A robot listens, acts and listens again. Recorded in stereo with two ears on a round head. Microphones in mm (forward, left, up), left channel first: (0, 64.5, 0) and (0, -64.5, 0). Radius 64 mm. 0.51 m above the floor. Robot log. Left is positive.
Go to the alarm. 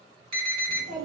note: The alarm: about 35° right or 145° right.
cmd yaw -35
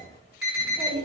cmd fwd 1.0
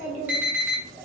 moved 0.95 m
note: The alarm is now 15° right.
cmd yaw -15
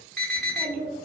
cmd fwd 1.0
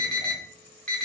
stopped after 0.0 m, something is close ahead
end: I am next to the alarm.